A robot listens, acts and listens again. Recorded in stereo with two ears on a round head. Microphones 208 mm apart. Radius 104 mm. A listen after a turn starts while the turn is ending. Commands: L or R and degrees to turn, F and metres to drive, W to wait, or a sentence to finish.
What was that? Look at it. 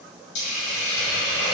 L55
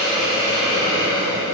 L55
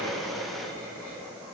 W
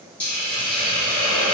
L10
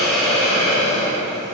Found it: a hiss, straight ahead, under 1 m away.